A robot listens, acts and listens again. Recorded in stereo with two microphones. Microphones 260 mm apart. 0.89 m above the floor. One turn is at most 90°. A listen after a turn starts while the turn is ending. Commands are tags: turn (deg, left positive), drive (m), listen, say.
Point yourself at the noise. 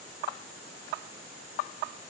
<listen/>
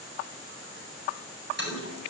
<turn deg="-45"/>
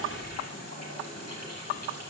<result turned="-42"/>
<turn deg="-90"/>
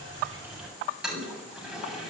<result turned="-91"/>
<say>Found it: a toilet flushing, straight ahead.</say>